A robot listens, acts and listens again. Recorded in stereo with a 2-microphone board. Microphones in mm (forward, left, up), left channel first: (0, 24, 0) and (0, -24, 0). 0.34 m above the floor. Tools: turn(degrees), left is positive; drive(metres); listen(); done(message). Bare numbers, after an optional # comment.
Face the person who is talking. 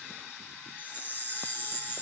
listen()
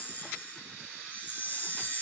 listen()
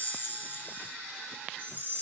done("I can't make out anyone speaking to turn to.")